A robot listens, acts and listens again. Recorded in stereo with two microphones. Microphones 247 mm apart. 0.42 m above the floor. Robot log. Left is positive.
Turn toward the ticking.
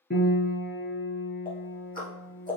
note: The ticking: about 35° left or 145° left.
cmd yaw +35
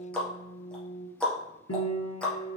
end: Facing the ticking, 2 to 4 m away.